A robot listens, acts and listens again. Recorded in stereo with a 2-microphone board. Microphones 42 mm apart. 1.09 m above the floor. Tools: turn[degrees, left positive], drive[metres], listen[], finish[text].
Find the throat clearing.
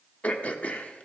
Thought: The throat clearing: about 35° left or 145° left.
Action: turn[35]
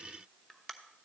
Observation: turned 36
Thought: So it is at 10° left.
Action: turn[10]
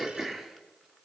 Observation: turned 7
Action: finish[Found it: throat clearing, straight ahead.]